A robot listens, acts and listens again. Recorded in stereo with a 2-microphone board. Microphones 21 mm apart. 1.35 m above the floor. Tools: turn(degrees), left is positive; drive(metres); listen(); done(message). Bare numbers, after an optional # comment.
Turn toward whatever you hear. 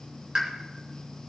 # The pop: about 30° right or 150° right.
turn(-30)
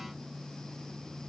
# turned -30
listen()
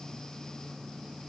done("I heard a pop, but can't make it out now. It was about straight ahead or 120° right.")